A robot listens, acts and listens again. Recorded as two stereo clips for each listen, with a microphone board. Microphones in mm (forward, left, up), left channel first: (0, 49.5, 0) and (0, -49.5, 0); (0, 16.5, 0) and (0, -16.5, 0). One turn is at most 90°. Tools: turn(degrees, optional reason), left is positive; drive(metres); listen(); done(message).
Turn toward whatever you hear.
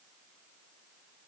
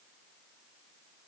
listen()
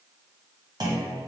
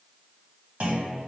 turn(degrees=-40, reason="The clunk: about 40° right or 140° right.")
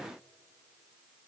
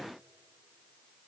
listen()
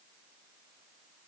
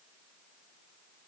done("I heard a clunk, but can't make it out now. It was about straight ahead or 100° right.")